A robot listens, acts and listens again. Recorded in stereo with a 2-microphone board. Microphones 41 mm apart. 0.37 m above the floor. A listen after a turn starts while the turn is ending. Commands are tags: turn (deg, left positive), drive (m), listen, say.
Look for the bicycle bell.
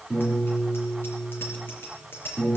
<turn deg="65"/>
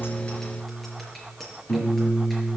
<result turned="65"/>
<say>Facing the bicycle bell.</say>